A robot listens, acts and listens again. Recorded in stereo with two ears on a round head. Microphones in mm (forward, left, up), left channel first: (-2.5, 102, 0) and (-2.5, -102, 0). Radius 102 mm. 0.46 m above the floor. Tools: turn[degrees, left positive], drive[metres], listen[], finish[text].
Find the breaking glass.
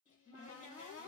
Action: listen[]
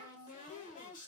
Action: listen[]
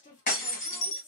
Thought: The breaking glass: about 35° left or 145° left.
Action: turn[35]
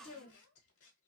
Action: listen[]
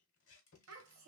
Action: finish[I heard breaking glass, but can't make it out now. It was about straight ahead or 110° left.]